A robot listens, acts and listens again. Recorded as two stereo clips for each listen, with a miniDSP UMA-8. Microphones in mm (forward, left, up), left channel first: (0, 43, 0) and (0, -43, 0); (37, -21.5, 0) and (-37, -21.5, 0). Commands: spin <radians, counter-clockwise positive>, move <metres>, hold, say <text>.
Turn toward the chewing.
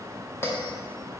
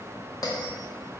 hold
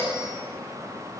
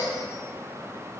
hold
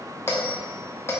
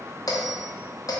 say I can't make out chewing to turn to.